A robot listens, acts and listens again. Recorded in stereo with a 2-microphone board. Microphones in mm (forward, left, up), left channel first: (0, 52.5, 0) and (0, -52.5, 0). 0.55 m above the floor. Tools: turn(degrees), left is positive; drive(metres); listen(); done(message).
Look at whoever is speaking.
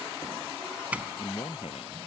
turn(degrees=65)
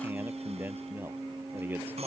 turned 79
turn(degrees=-20)
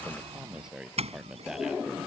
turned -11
done("Found it: a man speaking, straight ahead.")